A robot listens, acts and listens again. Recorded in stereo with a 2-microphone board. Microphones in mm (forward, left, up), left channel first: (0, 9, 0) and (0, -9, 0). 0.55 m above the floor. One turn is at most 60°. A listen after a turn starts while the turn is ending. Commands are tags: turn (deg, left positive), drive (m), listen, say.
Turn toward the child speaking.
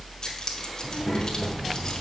<turn deg="-35"/>
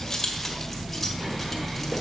<listen/>
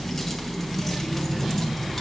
<turn deg="-45"/>
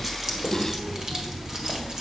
<turn deg="-60"/>
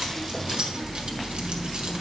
<turn deg="-45"/>
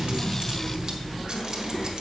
<listen/>
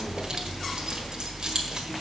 <say>Facing where the child speaking came from. I can't hear it now.</say>